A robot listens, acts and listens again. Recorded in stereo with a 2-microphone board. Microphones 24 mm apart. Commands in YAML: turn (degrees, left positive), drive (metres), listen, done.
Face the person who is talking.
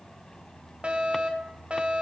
listen: true
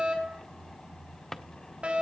listen: true
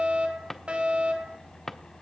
done: "I can't make out anyone speaking to turn to."